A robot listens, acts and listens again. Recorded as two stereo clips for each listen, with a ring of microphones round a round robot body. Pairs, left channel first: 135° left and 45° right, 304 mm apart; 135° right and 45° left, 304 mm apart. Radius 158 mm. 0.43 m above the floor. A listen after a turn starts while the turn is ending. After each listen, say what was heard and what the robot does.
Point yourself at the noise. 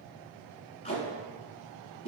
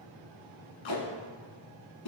The tape being pulled: 155° right. Turn 155° right.
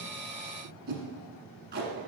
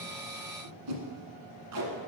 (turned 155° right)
The tape being pulled is now 15° left. Turn 15° left.
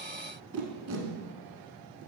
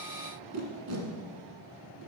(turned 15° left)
Facing the tape being pulled.